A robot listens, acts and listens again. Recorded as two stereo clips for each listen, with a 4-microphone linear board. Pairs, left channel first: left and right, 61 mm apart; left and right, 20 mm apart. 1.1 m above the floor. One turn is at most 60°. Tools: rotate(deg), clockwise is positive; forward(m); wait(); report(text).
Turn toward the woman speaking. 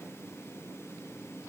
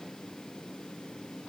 wait()
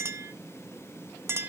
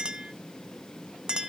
wait()
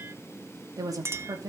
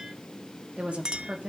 rotate(60)
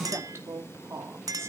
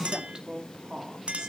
rotate(50)
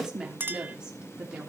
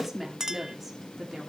rotate(15)
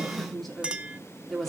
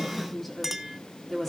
report("Facing the woman speaking.")